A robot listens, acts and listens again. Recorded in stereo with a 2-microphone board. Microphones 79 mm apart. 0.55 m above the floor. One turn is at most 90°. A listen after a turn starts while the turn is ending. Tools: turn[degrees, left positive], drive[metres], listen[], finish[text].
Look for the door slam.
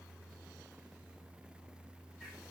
Action: listen[]
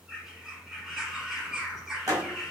Thought: The door slam: about 50° right or 130° right.
Action: turn[-50]
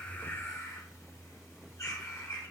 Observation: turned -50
Action: listen[]
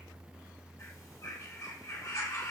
Action: finish[I heard a door slam, but can't make it out now. It was about straight ahead or 80° right.]